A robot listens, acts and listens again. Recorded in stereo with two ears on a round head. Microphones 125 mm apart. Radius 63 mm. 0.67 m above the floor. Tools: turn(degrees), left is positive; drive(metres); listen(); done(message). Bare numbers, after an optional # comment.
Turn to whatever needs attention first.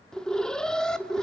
turn(30)
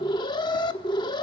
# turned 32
# So it is at 145° left.
turn(145)
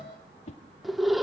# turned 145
done("Found it: an alarm, straight ahead.")